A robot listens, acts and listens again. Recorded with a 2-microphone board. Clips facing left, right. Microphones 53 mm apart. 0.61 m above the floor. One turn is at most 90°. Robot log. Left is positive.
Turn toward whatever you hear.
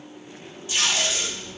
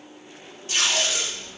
note: The tape being pulled: about 50° right or 130° right.
cmd yaw -50
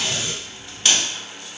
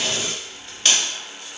end: Found it: tape being pulled, straight ahead.